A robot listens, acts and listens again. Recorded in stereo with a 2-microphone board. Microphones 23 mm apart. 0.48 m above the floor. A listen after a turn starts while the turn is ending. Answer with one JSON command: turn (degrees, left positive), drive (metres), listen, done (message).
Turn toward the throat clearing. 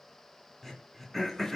{"turn": 30}
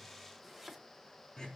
{"turn": 145}
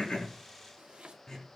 {"turn": 30}
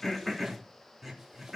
{"turn": -10}
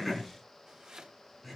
{"done": "Facing the throat clearing."}